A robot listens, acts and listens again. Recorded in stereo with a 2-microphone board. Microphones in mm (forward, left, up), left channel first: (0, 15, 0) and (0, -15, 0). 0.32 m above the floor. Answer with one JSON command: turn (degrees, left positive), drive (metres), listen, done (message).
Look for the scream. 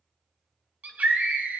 {"turn": -55}
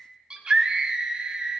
{"turn": -35}
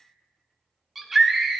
{"done": "Found it: a scream, straight ahead."}